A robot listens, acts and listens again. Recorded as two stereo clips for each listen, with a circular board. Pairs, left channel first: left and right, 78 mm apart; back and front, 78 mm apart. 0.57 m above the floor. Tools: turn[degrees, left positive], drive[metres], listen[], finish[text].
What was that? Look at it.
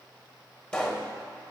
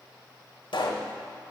Thought: The pop: 170° left.
Action: turn[170]
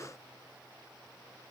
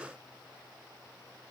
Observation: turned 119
Thought: Nothing new. It was at 50° left.
Action: turn[50]
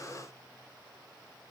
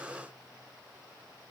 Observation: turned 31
Thought: Nothing new. It was at 20° left.
Action: turn[20]
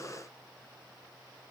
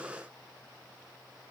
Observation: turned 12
Thought: Nothing new. It was at 10° left.
Action: turn[10]
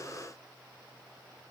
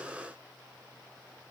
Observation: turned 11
Action: finish[I heard a pop from this way, but can't make it out now.]